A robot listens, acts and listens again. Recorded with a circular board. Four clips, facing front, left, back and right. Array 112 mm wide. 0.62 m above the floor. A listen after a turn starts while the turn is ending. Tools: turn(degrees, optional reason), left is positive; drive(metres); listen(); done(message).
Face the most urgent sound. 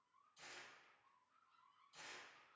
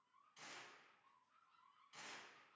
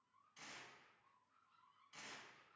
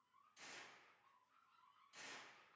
listen()
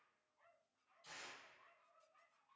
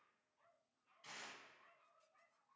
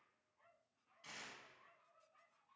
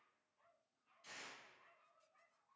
listen()
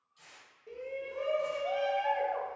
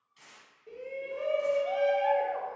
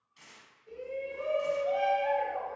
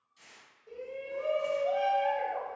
turn(degrees=40, reason="The shout: 40° left.")
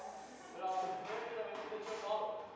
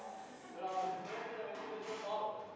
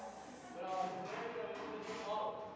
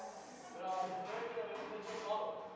turn(degrees=10, reason="The shout is now 10° left.")
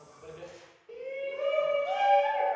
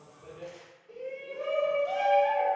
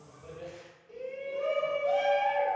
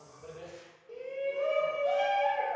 done("Facing the shout, 1 to 2 m away.")